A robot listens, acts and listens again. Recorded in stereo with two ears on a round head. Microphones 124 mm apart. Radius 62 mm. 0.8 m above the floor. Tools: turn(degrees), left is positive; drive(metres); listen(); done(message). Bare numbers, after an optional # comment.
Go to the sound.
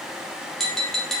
turn(30)
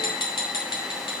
# So it is at 145° left.
turn(145)
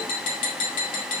# The tapping is now 60° left.
turn(60)
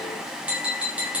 # The tapping is now 10° right.
turn(-10)
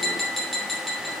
drive(1.0)
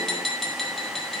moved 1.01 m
drive(1.0)
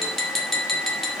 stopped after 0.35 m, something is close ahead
done("Arrived at the tapping, straight ahead.")